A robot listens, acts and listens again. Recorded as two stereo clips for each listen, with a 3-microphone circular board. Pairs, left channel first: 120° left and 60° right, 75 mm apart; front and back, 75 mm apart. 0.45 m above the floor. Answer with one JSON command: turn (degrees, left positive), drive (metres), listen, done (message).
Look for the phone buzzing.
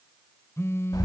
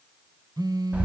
{"turn": 170}
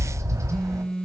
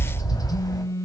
{"turn": 40}
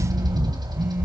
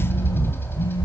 {"listen": true}
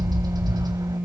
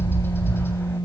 {"done": "Found it: a phone buzzing, straight ahead, under 1 m away."}